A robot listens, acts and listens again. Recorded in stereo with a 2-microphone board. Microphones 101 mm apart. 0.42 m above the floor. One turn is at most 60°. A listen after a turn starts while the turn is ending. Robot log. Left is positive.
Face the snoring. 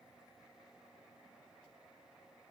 cmd idle
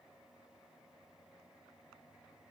cmd idle
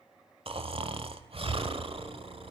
note: The snoring: about 65° right or 115° right.
cmd yaw -60
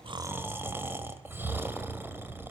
note: So it is at 25° right.
cmd yaw -25
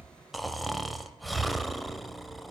end: Found it: snoring, straight ahead, 1 to 2 m away.